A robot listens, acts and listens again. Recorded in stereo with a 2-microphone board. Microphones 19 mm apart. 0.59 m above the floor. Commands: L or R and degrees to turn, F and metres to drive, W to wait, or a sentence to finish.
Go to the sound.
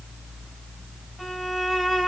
W
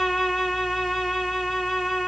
L25
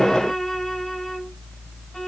L130
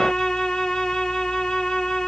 L65
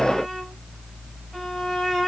R20
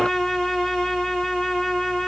F1.0
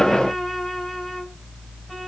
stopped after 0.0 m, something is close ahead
W
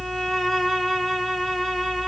R10
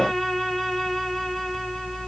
Blocked. The violin is further on, straight ahead.